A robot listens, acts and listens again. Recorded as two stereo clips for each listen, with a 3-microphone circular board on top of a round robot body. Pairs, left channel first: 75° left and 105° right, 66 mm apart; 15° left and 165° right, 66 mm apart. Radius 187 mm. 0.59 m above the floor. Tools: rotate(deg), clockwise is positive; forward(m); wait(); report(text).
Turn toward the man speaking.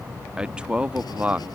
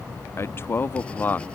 rotate(40)
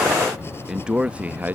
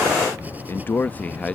rotate(50)
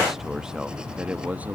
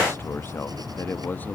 rotate(45)
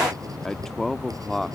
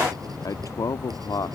rotate(10)
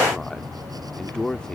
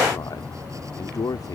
report("Found it: a man speaking, straight ahead.")